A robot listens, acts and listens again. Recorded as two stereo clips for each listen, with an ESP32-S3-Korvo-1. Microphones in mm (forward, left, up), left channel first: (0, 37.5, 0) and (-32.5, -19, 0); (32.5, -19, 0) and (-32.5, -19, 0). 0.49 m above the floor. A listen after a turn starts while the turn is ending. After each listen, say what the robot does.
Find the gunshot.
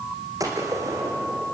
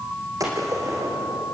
Turn 150° right.
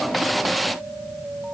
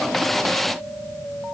Facing where the gunshot came from. I can't hear it now.